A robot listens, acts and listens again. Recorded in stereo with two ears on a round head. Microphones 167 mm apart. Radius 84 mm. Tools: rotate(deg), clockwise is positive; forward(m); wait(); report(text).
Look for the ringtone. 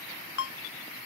rotate(-75)
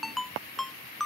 report("Found it: a ringtone, straight ahead.")